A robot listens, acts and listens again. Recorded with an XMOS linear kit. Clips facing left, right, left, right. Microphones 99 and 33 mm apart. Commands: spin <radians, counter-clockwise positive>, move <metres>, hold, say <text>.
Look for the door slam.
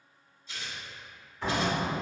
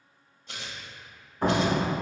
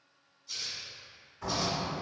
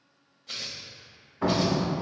spin -0.79
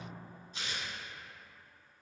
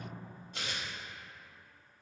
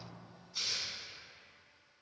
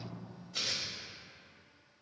hold
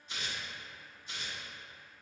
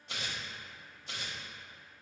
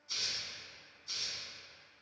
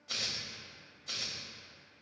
say I heard a door slam, but can't make it out now. It was about straight ahead or 90° right.